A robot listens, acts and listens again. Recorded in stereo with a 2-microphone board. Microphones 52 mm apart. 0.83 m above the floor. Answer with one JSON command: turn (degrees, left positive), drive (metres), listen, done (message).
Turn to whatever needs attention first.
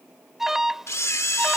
{"turn": -30}
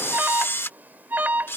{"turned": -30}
{"turn": -140}
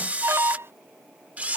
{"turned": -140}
{"turn": -55}
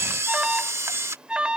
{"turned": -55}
{"turn": -15}
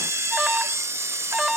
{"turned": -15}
{"done": "Facing the alarm."}